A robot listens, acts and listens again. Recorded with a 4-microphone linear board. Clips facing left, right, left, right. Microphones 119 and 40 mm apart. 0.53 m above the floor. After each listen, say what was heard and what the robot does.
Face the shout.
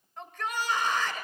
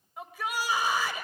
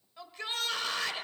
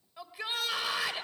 Turn 30° right.
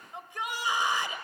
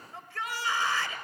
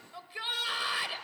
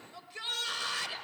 So it is at 20° left. Turn 20° left.
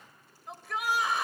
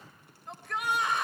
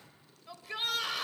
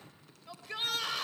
Found it: a shout, straight ahead, 1 to 2 m away.